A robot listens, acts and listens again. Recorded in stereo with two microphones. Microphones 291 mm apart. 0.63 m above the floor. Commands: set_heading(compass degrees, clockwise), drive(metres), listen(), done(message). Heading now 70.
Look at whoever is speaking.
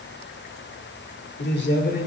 set_heading(35)
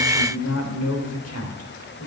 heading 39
set_heading(274)
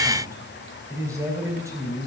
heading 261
set_heading(271)
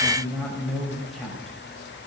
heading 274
done("Facing the man speaking.")